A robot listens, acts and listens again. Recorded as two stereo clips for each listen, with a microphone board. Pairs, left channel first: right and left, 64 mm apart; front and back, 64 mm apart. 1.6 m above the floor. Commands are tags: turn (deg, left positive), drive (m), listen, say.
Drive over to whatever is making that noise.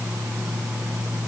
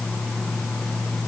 <listen/>
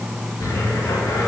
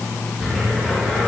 <turn deg="-100"/>
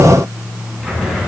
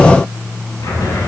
<drive m="1.0"/>
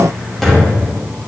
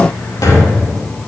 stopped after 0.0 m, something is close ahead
<say>Something is in my way. I am facing the cupboard door but have not reached it.</say>